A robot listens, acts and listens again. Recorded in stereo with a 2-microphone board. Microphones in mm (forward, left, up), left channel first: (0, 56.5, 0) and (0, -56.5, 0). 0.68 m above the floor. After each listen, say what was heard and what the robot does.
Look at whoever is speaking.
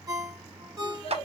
The child speaking: about 55° left or 125° left. Turn 55° left.
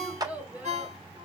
So it is at 15° right. Turn 15° right.
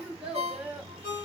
The child speaking is now 15° right. Turn 15° right.
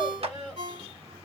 The child speaking is now 15° right. Turn 15° right.
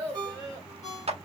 The child speaking is now 15° right. Turn 15° right.
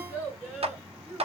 Facing the child speaking, 1 to 2 m away.